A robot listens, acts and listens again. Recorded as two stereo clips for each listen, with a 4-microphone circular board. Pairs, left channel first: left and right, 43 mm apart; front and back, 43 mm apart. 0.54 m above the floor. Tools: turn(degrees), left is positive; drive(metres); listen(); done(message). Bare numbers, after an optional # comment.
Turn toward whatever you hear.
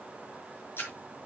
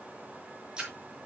# The splash: 105° left.
turn(105)
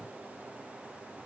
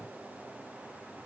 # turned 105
done("I heard a splash from this way, but can't make it out now.")